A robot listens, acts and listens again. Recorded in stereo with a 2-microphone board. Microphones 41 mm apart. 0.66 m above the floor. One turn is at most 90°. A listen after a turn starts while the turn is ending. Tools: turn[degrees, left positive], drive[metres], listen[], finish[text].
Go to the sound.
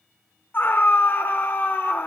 Thought: The scream: about 60° left or 120° left.
Action: turn[60]
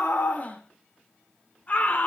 Thought: So it is at 45° left.
Action: turn[45]
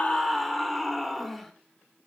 Action: drive[1.0]
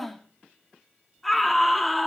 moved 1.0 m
Action: drive[1.0]
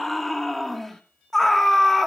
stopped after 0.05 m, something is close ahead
Action: finish[I am next to the scream.]